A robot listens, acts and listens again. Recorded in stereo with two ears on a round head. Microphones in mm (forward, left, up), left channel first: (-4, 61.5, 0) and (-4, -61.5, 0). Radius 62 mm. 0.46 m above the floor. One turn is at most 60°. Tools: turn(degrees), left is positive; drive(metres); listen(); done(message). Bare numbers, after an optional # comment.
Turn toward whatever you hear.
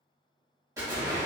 # The explosion: about 25° right or 155° right.
turn(-25)
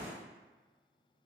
# So it is at 130° right.
turn(-60)
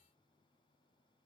# Nothing new. It was at 70° right.
turn(-60)
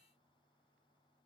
# Nothing new. It was at 10° right.
turn(-10)
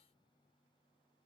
done("I heard an explosion from this way, but can't make it out now.")